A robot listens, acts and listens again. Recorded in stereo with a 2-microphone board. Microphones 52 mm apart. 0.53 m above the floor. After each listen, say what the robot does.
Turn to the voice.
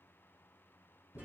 Keep listening.
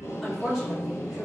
Turn 30° left.
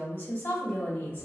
Turn 135° left.
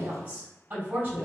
Turn 40° right.
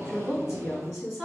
Turn 15° right.
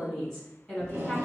Facing the woman speaking, 2 to 4 m away.